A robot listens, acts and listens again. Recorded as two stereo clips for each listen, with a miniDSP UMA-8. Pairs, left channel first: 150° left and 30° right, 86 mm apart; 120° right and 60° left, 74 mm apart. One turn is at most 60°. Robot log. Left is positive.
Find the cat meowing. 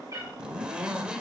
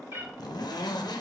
note: The cat meowing: 15° left.
cmd yaw +15
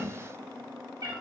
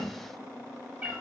end: Found it: a cat meowing, straight ahead.